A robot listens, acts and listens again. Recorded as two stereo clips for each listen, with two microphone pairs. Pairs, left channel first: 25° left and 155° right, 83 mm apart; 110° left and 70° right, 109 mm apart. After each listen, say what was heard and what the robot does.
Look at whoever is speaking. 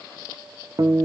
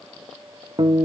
Keep listening.
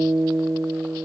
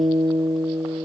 Keep listening.
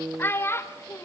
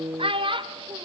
The child speaking: 35° right. Turn 35° right.
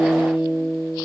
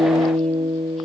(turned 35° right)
Keep listening.
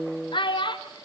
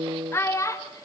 The child speaking is now 50° left. Turn 50° left.
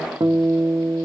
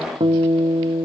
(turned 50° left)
Keep listening.
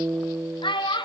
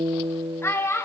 The child speaking is now 45° left. Turn 45° left.
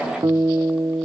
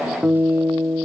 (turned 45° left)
Keep listening.
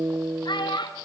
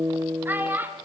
Found it: a child speaking, straight ahead, 2 to 4 m away.